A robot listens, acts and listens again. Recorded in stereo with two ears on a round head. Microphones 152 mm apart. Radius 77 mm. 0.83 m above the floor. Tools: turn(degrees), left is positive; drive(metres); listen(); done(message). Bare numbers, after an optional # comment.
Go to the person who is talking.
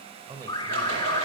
# The man speaking: about 20° right or 160° right.
turn(-20)
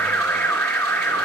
listen()
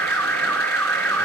listen()
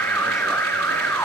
done("I heard a man speaking, but can't make it out now. It was about straight ahead or 140° right. I did not reach it.")